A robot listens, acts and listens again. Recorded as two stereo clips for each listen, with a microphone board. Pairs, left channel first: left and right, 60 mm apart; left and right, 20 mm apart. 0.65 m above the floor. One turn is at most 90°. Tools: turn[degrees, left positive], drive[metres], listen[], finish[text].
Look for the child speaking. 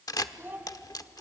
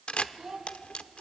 Thought: The child speaking: about 35° right or 145° right.
Action: turn[-35]
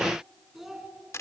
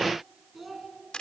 Action: finish[Facing the child speaking.]